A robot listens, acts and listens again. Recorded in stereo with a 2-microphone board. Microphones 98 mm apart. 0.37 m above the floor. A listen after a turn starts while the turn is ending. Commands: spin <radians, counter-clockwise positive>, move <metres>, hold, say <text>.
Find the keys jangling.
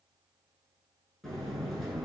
hold
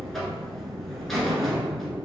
hold
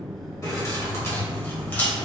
spin 0.26
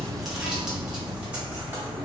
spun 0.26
spin -0.26
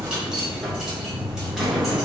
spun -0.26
say Found it: keys jangling, straight ahead.